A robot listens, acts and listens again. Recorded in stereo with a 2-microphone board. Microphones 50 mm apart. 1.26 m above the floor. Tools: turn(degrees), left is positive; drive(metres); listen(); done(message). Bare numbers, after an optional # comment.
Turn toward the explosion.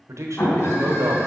# The explosion: about 40° left or 140° left.
turn(40)
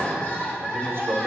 listen()
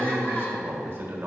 done("I heard an explosion, but can't make it out now. It was about straight ahead or 100° left.")